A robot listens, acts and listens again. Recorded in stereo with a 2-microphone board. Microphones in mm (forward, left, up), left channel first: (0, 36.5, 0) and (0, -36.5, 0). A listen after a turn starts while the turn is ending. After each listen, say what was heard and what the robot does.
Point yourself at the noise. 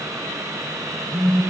Turn 30° left.
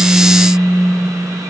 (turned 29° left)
So it is at 140° left. Turn 140° left.
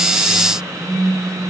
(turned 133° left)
Facing the phone buzzing.